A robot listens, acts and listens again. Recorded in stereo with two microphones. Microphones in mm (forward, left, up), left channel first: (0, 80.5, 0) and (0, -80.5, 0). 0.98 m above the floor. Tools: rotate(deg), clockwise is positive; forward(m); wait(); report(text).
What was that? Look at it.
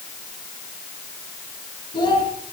rotate(-30)
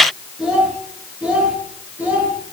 rotate(10)
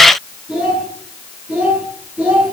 rotate(10)
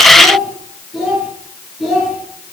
report("Found it: a child speaking, straight ahead, over 4 m away.")